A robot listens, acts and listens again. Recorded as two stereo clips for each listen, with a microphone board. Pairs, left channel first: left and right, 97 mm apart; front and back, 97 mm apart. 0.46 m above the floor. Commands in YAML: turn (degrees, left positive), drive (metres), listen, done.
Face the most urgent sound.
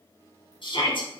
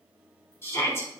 turn: 60
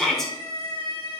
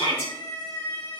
done: "Found it: a shout, straight ahead, 2 to 4 m away."